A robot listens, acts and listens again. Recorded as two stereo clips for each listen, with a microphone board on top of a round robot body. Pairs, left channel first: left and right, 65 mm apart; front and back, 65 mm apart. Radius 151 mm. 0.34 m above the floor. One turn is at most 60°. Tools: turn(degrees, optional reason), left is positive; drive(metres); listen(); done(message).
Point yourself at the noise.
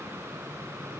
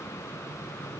listen()
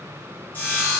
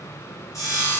turn(degrees=30, reason="The sawing: 30° left.")
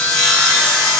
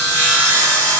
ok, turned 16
turn(degrees=15, reason="The sawing is now 15° left.")
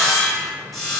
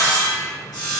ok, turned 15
done("Found it: sawing, straight ahead, 1 to 2 m away.")